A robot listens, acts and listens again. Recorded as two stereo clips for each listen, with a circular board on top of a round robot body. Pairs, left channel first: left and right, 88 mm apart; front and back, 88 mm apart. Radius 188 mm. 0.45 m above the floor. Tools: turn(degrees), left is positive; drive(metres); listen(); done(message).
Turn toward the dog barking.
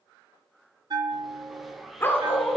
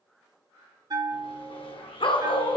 turn(degrees=20)
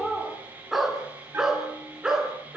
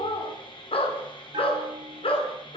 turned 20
done("Facing the dog barking, over 4 m away.")